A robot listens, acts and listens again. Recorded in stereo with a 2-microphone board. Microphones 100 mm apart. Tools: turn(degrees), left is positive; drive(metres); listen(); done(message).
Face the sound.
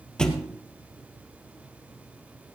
turn(degrees=30)
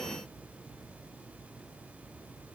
listen()
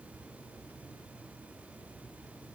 done("I heard a thud, but can't make it out now. It was about 25° right or 145° left.")